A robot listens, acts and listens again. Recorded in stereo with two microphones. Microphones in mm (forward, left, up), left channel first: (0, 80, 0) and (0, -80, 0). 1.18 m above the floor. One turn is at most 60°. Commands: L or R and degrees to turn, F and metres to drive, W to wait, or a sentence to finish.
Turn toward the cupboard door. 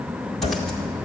L40
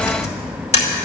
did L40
W
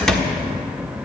Facing the cupboard door, 1 to 2 m away.